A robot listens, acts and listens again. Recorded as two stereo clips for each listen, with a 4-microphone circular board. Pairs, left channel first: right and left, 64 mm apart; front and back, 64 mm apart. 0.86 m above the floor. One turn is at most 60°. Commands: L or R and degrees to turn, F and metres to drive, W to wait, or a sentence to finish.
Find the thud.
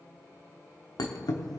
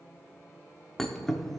R60
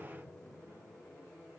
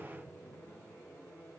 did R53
R35
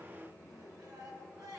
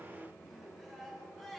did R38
I heard a thud from this way, but can't make it out now.